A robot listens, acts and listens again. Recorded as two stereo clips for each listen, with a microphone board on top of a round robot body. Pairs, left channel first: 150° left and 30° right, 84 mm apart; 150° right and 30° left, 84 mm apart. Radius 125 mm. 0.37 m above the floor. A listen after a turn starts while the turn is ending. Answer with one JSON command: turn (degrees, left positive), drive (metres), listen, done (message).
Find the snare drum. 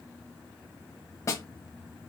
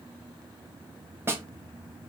{"turn": 95}
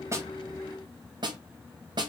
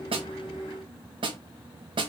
{"done": "Facing the snare drum."}